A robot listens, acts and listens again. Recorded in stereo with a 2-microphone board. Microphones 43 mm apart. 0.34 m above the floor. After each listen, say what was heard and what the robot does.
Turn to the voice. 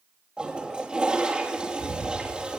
Keep listening.
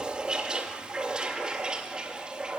Keep listening.
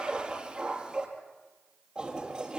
I can't make out anyone speaking, only a toilet flushing.